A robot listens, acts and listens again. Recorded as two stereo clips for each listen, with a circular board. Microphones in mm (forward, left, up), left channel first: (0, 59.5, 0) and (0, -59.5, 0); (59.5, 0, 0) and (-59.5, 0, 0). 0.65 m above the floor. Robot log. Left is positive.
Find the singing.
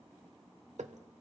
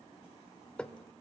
cmd idle
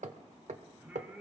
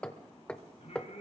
note: The singing: 10° right.
cmd yaw -10
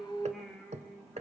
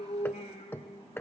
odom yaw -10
end: Found it: singing, straight ahead, over 4 m away.